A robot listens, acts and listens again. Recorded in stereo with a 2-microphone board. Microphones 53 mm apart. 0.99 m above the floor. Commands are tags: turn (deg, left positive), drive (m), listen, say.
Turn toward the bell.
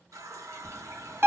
<turn deg="-55"/>
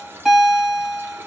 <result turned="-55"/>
<turn deg="-10"/>
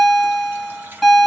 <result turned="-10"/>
<say>Facing the bell.</say>